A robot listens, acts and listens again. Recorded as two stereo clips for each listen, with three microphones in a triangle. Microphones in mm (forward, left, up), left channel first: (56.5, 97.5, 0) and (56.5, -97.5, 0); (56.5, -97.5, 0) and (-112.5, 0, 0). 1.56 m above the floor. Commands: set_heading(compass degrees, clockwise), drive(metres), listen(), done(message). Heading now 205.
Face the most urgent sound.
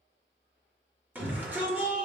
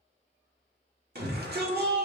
set_heading(15)
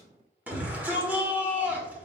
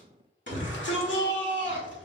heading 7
set_heading(17)
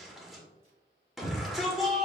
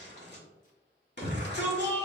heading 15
done("Facing the shout.")